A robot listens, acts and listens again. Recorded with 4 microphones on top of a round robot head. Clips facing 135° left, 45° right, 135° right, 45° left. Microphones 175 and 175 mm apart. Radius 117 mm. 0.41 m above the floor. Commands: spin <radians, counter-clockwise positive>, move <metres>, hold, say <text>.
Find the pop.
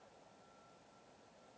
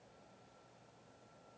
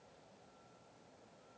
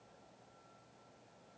hold
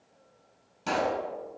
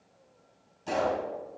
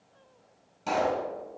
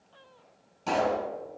spin 2.36
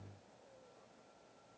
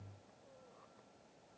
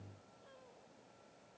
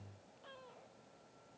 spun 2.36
say I heard a pop from this way, but can't make it out now.